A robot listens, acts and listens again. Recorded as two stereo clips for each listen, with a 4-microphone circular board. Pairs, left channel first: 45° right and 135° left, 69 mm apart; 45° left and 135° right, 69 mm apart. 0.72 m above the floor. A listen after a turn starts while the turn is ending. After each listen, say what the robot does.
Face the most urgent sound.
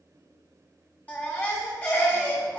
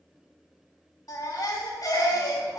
Turn 20° left.
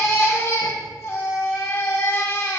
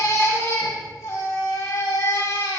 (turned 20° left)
Found it: a baby crying, straight ahead, 1 to 2 m away.